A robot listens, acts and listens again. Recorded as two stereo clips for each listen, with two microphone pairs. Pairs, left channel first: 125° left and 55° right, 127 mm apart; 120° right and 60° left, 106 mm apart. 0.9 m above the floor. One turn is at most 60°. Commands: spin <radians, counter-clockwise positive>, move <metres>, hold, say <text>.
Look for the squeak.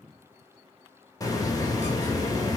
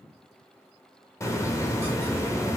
hold
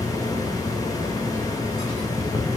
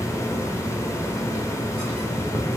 hold
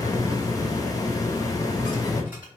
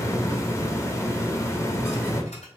say I can't make out a squeak, only a hiss.